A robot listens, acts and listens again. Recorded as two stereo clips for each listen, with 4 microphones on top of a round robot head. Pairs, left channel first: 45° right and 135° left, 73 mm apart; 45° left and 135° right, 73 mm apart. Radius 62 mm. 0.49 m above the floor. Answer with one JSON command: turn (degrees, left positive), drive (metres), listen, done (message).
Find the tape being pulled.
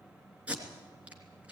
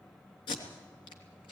{"turn": 65}
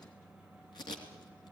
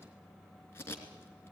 {"turn": -15}
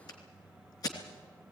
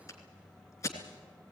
{"done": "Facing the tape being pulled, 2 to 4 m away."}